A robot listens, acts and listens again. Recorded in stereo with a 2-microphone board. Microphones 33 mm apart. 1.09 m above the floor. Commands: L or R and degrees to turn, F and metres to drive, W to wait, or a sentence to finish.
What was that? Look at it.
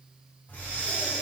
L45
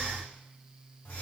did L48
L75
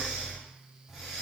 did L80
Facing the breathing, 1 to 2 m away.